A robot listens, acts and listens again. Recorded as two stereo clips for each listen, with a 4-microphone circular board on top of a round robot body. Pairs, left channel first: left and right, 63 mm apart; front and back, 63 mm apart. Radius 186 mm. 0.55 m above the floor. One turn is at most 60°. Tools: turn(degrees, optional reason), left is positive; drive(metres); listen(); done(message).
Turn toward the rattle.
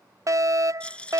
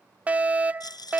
turn(degrees=15, reason="The rattle: 15° left.")
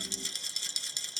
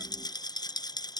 done("Facing the rattle.")